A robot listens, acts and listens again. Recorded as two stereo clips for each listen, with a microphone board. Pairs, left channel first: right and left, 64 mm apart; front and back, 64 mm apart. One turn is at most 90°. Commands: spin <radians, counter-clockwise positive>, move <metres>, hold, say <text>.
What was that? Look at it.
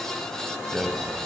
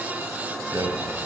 spin 1.57
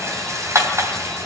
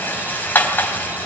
spin 1.05
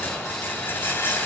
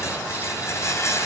spin -0.70
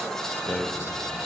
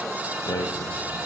say Facing the rattle, 2 to 4 m away.